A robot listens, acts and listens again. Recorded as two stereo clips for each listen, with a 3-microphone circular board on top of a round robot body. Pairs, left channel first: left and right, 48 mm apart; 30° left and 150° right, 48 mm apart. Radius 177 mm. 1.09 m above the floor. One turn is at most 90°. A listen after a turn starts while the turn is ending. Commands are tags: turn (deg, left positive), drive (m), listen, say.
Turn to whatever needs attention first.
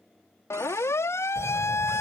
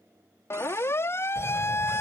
<turn deg="65"/>
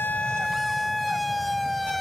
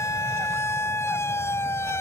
<say>Facing the siren.</say>